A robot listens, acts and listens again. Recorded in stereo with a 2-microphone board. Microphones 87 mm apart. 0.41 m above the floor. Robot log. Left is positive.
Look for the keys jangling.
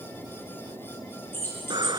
note: The keys jangling: about 30° left or 150° left.
cmd yaw +30
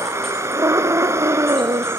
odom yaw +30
cmd idle
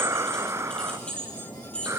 note: So it is at 15° left.
cmd yaw +15
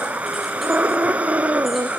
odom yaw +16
cmd idle
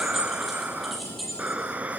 end: Found it: keys jangling, straight ahead, over 4 m away.